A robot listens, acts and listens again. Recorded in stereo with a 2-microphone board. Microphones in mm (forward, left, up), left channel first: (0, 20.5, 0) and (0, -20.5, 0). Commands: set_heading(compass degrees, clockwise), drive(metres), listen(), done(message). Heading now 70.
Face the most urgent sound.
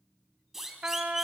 set_heading(100)
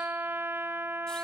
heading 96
listen()
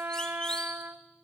listen()
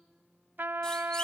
done("I heard a siren, but can't make it out now. It was about 20° left or 145° right.")